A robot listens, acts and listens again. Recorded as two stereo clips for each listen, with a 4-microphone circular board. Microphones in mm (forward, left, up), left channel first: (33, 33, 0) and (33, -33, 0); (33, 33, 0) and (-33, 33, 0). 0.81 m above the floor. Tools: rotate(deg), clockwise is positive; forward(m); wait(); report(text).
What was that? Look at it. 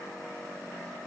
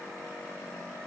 wait()
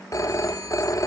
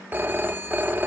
rotate(-120)
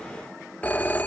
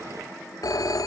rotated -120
rotate(-20)
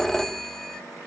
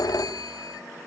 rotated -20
report("Found it: a phone ringing, straight ahead, 1 to 2 m away.")